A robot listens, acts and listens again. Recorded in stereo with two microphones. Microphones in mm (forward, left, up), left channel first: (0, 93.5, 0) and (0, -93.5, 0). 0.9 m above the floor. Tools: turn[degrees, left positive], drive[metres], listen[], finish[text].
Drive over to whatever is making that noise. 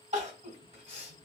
Thought: The crying: about 35° right or 145° right.
Action: turn[-35]
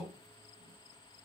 Action: listen[]
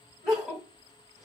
Action: drive[1.0]
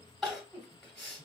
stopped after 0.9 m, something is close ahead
Action: finish[I am next to the crying.]